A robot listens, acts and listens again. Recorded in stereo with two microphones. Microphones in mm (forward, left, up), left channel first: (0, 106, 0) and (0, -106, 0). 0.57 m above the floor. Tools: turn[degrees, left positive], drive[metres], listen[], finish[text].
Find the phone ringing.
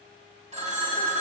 Thought: The phone ringing: about 35° right or 145° right.
Action: turn[-35]
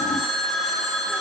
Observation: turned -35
Action: finish[Found it: a phone ringing, straight ahead, 2 to 4 m away.]